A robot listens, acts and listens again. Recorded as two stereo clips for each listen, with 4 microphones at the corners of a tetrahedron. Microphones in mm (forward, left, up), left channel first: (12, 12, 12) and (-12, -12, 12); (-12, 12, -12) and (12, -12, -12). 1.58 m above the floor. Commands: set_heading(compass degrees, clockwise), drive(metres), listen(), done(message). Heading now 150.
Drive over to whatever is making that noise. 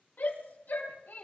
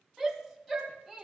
set_heading(100)
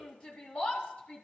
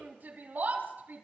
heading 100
set_heading(110)
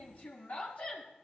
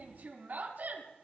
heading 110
drive(1.0)
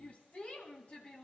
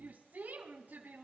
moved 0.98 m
set_heading(120)
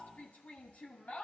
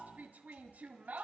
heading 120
drive(1.0)
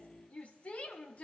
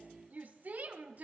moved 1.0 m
drive(1.0)
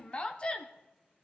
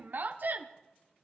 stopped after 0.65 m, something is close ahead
set_heading(135)
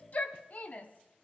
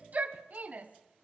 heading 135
done("I am next to the shout.")